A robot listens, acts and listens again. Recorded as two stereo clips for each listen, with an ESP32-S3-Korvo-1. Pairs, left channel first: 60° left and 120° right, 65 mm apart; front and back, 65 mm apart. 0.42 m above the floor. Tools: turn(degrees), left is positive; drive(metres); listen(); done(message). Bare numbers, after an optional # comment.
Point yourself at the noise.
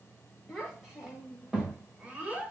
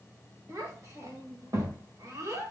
# The child speaking: 175° left.
turn(175)
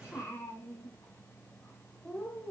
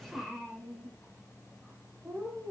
# The child speaking is now 125° left.
turn(125)
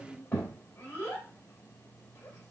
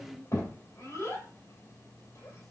# The child speaking is now 10° right.
turn(-10)
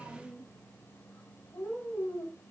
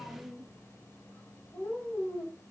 done("Facing the child speaking, 1 to 2 m away.")